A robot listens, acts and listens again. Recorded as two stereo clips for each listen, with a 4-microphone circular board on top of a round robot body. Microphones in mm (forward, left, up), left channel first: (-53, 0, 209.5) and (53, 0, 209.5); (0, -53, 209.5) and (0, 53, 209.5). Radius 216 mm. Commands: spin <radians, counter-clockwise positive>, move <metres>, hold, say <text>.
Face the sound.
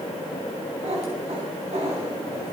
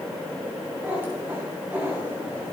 spin 0.26
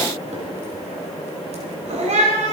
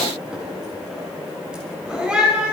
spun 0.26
spin 0.17
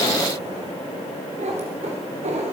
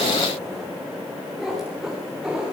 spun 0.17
say Found it: a cat meowing, straight ahead.